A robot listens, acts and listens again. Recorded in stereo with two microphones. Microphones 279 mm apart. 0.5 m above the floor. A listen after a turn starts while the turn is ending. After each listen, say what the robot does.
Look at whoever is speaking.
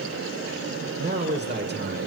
Turn 35° right.
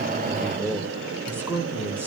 Turn 10° right.
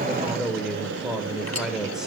Facing the man speaking.